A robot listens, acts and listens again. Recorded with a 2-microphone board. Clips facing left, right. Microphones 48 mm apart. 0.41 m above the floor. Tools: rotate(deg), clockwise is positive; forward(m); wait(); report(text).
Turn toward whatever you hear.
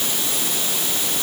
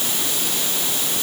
wait()
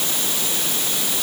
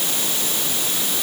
wait()
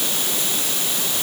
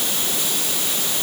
report("I can't make out anything to turn to.")